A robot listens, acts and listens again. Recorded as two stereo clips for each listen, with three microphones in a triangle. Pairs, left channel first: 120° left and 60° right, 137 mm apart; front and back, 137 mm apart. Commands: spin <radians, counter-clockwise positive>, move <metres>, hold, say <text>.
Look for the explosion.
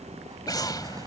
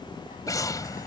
spin 1.05
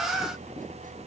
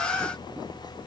say Facing where the explosion came from. I can't hear it now.